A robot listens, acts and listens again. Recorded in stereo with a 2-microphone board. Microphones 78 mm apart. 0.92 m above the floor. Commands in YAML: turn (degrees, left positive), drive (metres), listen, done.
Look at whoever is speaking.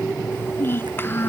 turn: 30
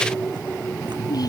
listen: true
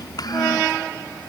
turn: 120
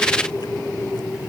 listen: true
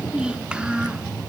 turn: -15
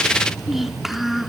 done: "Found it: a child speaking, straight ahead."